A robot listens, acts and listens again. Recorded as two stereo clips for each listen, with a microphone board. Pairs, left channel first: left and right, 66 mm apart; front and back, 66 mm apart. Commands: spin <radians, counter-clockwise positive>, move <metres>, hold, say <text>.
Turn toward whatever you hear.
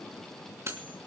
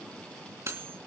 spin -2.36
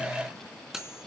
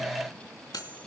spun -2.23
say Found it: cutlery clinking, straight ahead.